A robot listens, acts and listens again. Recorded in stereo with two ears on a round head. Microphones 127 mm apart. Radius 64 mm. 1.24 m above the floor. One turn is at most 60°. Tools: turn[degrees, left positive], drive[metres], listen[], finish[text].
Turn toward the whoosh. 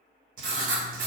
Action: listen[]
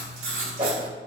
Thought: The whoosh: about 35° right or 145° right.
Action: turn[-35]
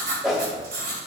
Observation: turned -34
Action: finish[Found it: a whoosh, straight ahead.]